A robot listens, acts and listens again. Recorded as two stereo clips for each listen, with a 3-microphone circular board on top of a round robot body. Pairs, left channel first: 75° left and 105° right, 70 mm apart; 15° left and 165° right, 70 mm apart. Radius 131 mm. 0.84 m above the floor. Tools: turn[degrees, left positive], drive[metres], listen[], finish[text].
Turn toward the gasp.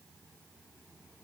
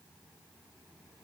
Action: listen[]
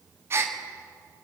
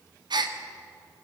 Thought: The gasp: 160° right.
Action: turn[-160]
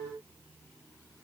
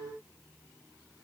Action: finish[I heard a gasp from this way, but can't make it out now.]